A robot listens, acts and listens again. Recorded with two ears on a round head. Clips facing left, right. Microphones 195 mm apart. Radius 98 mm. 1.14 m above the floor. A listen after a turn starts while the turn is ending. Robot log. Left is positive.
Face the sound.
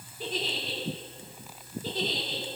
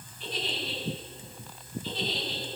note: The giggle: about 40° left or 140° left.
cmd yaw +40
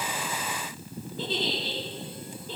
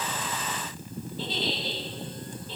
note: So it is at 100° left.
cmd yaw +100
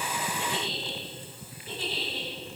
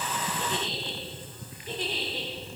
note: The giggle is now 15° right.
cmd yaw -15
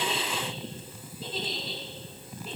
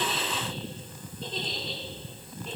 end: Facing the giggle, 2 to 4 m away.